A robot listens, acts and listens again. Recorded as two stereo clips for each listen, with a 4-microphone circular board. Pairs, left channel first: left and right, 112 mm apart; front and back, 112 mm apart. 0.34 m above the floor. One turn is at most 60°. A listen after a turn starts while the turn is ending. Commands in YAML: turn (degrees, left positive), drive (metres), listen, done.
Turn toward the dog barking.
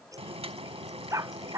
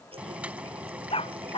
turn: -30
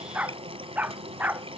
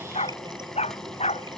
turn: -15
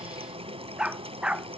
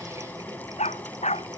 turn: -10
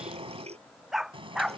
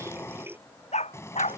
done: "Facing the dog barking."